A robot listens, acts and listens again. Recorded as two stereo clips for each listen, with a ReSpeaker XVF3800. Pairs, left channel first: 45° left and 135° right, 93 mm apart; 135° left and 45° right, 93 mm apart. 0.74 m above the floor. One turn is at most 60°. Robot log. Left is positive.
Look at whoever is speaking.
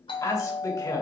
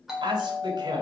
end: Facing the man speaking.